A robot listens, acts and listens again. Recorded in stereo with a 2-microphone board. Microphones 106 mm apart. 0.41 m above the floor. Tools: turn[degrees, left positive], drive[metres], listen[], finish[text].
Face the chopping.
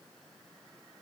Action: listen[]
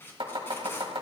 Thought: The chopping: about 60° right or 120° right.
Action: turn[-60]
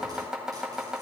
Action: finish[Facing the chopping.]